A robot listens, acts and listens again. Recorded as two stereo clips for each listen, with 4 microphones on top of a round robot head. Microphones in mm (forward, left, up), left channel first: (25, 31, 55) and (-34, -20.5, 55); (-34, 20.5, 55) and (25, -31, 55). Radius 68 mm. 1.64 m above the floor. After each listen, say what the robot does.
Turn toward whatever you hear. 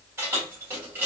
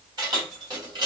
Turn 75° right.
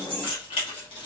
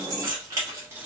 Turn 20° left.
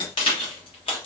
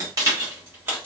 Turn 25° left.
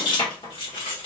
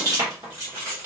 Turn 25° left.
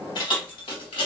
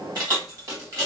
Turn 15° left.
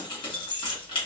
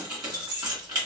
Facing the keys jangling.